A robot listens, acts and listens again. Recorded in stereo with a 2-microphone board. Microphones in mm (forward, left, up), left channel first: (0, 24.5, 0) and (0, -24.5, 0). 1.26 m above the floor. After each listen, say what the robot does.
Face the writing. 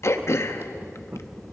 Turn 55° right.
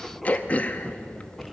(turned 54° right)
Facing the writing, 1 to 2 m away.